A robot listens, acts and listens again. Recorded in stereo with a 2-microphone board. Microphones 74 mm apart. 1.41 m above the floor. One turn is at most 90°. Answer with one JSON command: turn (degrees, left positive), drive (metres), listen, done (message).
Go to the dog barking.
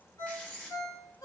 {"listen": true}
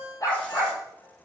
{"turn": 50}
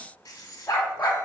{"turn": 70}
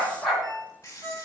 {"drive": 1.0}
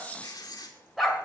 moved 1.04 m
{"drive": 1.0}
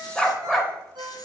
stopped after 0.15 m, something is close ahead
{"done": "Arrived at the dog barking, straight ahead."}